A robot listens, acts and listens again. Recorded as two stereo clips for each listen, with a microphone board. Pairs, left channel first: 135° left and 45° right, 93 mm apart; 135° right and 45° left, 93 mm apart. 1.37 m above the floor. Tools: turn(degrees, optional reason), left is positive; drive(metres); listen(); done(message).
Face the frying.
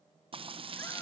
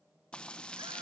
turn(degrees=-55, reason="The frying: 55° right.")
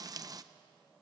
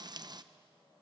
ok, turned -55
done("Facing the frying.")